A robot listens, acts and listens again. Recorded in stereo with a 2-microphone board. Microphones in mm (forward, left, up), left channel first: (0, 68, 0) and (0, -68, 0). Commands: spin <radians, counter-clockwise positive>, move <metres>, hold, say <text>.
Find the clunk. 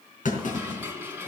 spin 1.13
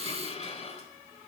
hold
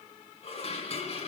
say I heard a clunk, but can't make it out now. It was about straight ahead or 50° left.